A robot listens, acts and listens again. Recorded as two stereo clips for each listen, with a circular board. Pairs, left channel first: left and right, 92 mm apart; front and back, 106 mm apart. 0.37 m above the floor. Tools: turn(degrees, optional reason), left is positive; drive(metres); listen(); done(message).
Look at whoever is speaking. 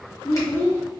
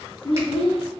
turn(degrees=30, reason="The child speaking: 30° left.")
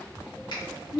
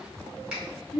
done("Found it: a child speaking, straight ahead.")